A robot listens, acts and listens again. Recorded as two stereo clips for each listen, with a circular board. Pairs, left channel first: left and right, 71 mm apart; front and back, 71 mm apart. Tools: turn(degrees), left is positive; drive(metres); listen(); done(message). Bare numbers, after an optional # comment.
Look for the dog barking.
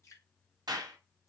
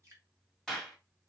listen()
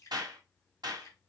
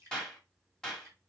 listen()
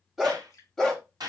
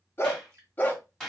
# The dog barking: 20° left.
turn(20)
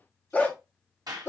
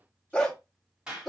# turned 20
# The dog barking is now 85° left.
turn(85)
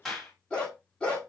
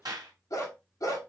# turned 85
# The dog barking is now 20° left.
turn(20)
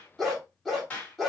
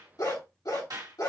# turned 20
done("Facing the dog barking, 1 to 2 m away.")